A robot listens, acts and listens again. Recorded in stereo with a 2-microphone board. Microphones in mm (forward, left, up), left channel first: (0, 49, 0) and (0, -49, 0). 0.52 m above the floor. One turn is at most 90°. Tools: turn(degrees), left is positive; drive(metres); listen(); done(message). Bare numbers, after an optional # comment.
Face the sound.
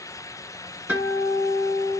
turn(-30)
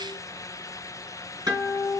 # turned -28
# So it is at 140° right.
turn(-90)
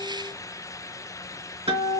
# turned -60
# The guitar is now 80° right.
turn(-80)
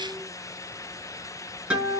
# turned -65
# The guitar is now 15° right.
turn(-15)
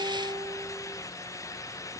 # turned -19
done("Facing the guitar, 2 to 4 m away.")